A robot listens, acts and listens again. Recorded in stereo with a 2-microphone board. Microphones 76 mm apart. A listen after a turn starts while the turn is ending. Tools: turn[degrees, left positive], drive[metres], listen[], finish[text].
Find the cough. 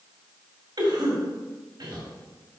Thought: The cough: about 65° right or 115° right.
Action: turn[-65]
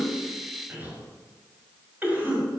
Thought: So it is at 25° right.
Action: turn[-25]
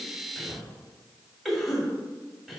Action: finish[Found it: a cough, straight ahead.]